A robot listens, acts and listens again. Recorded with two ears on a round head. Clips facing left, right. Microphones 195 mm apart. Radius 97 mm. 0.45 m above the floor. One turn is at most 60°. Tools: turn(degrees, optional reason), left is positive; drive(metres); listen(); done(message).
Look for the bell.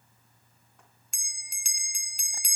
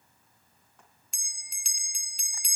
turn(degrees=45, reason="The bell: about 45° left or 135° left.")
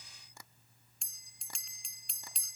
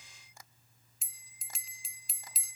done("Found it: a bell, straight ahead.")